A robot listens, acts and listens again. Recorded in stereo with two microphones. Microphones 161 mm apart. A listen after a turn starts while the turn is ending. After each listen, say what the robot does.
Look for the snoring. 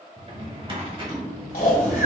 Turn 60° left.
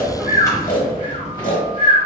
Turn 55° left.
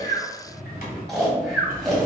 Facing the snoring.